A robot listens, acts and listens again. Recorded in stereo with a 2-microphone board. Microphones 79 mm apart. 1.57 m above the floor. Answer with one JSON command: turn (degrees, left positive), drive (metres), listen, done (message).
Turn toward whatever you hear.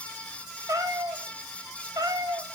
{"turn": -55}
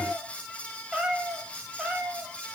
{"turn": -10}
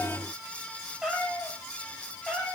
{"turn": -10}
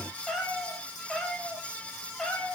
{"done": "Found it: a cat meowing, straight ahead, over 4 m away."}